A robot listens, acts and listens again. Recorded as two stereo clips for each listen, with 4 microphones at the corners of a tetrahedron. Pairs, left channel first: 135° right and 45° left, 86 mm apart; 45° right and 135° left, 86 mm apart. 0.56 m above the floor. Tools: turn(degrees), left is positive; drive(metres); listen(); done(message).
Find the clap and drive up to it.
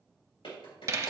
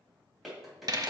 turn(degrees=-135)
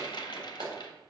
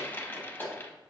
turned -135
turn(degrees=20)
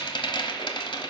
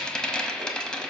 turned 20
listen()
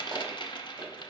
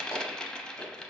listen()
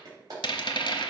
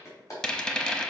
drive(metres=1.0)
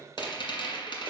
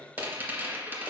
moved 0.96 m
listen()
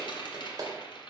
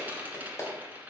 drive(metres=1.0)
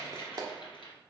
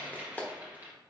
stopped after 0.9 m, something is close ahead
turn(degrees=20)
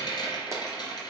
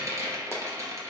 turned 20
listen()
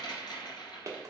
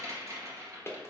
done("Arrived at the clap, straight ahead.")